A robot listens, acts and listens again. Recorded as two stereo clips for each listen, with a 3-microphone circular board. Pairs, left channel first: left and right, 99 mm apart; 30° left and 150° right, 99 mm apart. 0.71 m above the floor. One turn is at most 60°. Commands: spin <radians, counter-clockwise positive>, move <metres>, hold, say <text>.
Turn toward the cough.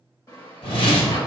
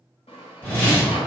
hold
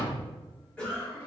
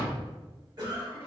spin 1.05
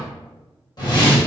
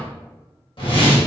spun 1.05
spin 1.05
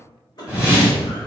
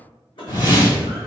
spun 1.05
spin 0.87
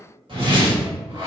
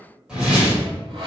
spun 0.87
hold
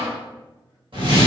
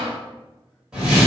hold
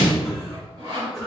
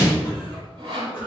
say Found it: a cough, straight ahead.